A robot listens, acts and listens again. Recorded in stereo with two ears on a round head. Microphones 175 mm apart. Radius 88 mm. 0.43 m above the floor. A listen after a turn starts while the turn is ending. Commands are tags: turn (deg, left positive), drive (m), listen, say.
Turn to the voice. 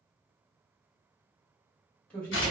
<turn deg="30"/>
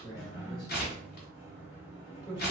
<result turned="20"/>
<turn deg="150"/>
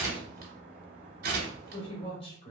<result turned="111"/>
<turn deg="40"/>
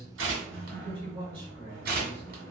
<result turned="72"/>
<turn deg="-35"/>
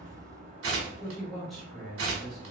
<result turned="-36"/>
<say>Found it: a man speaking, straight ahead, 1 to 2 m away.</say>